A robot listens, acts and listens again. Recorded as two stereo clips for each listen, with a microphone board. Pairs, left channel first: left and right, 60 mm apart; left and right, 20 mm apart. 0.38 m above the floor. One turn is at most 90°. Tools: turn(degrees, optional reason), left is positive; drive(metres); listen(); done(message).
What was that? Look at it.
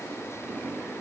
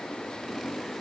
listen()
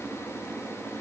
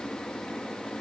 listen()
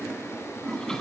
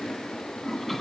turn(degrees=30)
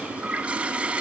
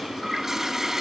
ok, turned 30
turn(degrees=-20, reason="So it is at 20° right.")
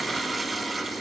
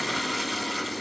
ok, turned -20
done("Found it: a toilet flushing, straight ahead, 1 to 2 m away.")